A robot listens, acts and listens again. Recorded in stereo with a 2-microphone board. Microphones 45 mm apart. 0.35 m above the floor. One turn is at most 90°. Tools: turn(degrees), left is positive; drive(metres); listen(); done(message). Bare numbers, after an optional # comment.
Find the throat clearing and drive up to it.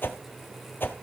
listen()
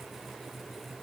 listen()
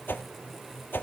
done("I can't make out throat clearing to turn to.")